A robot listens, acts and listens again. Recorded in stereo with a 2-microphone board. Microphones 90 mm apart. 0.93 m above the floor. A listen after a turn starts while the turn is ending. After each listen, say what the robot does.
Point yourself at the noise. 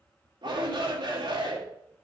Turn 65° right.
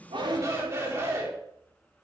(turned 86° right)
Turn 30° right.
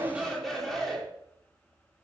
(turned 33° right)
Found it: a shout, straight ahead.